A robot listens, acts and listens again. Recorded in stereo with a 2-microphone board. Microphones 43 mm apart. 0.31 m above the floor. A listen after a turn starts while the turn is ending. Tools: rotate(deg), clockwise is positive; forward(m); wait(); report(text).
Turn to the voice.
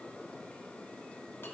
wait()
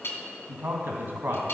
rotate(60)
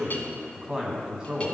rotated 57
rotate(20)
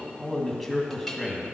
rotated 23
report("Found it: a man speaking, straight ahead, 2 to 4 m away.")